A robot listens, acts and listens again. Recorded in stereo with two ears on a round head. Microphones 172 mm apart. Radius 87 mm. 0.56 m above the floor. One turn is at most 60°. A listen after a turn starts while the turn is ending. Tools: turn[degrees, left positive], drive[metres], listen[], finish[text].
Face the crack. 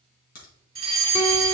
Thought: The crack: about 45° left or 135° left.
Action: turn[45]
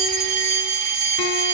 Action: listen[]
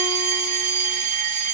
Action: finish[I heard a crack, but can't make it out now. It was about straight ahead or 90° left.]